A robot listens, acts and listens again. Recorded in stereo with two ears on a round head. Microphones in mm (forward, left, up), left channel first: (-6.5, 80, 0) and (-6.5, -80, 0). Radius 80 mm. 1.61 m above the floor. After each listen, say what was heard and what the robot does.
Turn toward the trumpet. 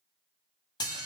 Keep listening.
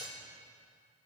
Keep listening.
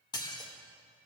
I can't make out a trumpet to turn to.